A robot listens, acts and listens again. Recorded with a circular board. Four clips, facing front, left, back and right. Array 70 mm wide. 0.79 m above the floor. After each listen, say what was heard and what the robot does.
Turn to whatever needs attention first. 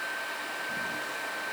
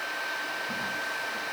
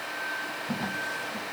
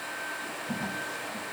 Keep listening.
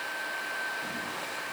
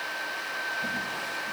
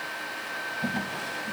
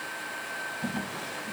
Keep listening.
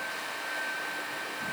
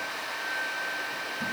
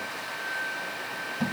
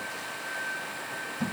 I can't make out anything urgent.